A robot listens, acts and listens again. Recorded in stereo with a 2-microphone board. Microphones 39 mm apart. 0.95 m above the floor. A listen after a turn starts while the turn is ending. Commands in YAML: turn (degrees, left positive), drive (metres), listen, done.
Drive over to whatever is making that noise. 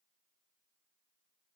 listen: true
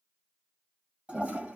turn: -30
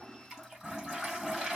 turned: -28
drive: 1.0
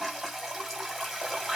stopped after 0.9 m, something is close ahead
done: "Arrived at the toilet flushing, straight ahead."